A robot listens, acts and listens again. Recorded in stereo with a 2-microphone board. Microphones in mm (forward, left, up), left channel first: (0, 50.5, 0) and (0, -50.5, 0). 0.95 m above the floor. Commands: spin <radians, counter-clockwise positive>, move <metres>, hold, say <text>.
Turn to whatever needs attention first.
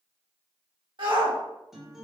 spin -0.96
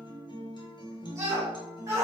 spin -0.61
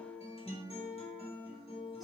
hold
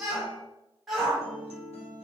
say Facing the shout.